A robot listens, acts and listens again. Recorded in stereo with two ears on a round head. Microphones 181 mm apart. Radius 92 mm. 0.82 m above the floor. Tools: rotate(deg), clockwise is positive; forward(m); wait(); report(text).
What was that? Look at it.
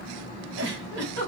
rotate(65)
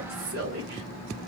rotate(50)
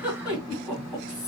report("Facing the giggle, 1 to 2 m away.")